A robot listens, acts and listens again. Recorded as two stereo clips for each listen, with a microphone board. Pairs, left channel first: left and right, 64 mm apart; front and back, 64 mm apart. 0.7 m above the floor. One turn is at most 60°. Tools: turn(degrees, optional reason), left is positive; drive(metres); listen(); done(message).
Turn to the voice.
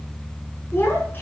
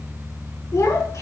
turn(degrees=35, reason="The child speaking: 35° left.")
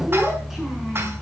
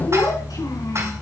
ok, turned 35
done("Found it: a child speaking, straight ahead, over 4 m away.")